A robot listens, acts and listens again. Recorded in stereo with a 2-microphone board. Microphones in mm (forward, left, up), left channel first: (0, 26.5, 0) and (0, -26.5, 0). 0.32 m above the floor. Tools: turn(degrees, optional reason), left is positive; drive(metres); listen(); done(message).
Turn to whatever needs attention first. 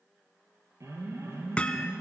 turn(degrees=-65, reason="The alarm: about 65° right or 115° right.")
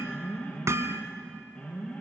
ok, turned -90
turn(degrees=25, reason="So it is at 25° left.")
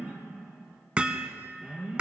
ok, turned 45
turn(degrees=-20, reason="The alarm is now 20° right.")
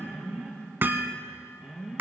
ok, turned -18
done("Facing the alarm.")